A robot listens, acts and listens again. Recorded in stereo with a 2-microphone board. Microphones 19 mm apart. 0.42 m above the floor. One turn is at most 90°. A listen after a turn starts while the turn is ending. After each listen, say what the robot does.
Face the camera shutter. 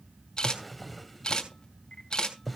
Turn 50° left.
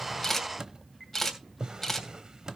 Turn 10° left.
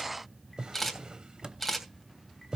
Found it: a camera shutter, straight ahead, 2 to 4 m away.